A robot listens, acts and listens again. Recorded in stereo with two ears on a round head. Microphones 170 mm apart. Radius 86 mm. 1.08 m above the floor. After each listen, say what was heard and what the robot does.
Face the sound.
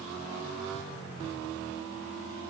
Keep listening.
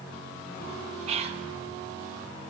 The whispering: about 35° right or 145° right. Turn 35° right.
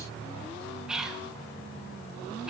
Facing the whispering, under 1 m away.